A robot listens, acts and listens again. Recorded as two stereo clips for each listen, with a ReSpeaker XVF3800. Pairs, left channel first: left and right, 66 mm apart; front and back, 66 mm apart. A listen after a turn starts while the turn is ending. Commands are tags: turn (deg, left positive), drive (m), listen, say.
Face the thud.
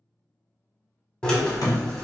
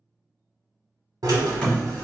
<turn deg="75"/>
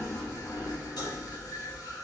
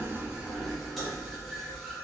<say>Facing where the thud came from. I can't hear it now.</say>